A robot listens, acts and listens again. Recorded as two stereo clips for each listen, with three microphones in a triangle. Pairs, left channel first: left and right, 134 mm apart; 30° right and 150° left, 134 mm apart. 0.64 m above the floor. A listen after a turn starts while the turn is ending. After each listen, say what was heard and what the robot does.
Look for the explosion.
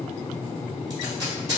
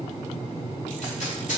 Keep listening.
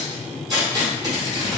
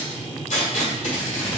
Keep listening.
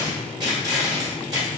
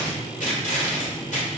I can't make out an explosion to turn to.